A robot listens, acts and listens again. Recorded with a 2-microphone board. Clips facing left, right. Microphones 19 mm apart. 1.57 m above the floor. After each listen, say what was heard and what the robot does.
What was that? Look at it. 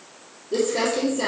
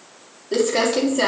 The crumpling: about 75° right or 105° right. Turn 75° right.
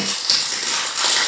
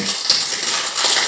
Facing the crumpling, 2 to 4 m away.